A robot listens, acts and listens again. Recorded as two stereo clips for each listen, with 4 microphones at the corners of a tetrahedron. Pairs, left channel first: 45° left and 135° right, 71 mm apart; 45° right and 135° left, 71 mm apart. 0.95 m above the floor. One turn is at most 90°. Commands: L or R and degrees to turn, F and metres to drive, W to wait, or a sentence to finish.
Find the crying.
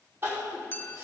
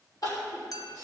R75
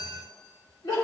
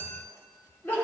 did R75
L15
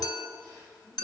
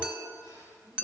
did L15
W
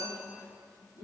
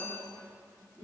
Facing the crying.